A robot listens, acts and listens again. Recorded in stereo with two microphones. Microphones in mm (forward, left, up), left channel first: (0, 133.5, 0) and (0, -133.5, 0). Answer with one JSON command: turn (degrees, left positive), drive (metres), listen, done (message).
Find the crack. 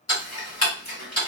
{"listen": true}
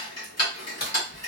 {"turn": 35}
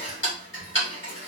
{"listen": true}
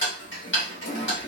{"done": "I heard a crack, but can't make it out now. It was about straight ahead or 110° left."}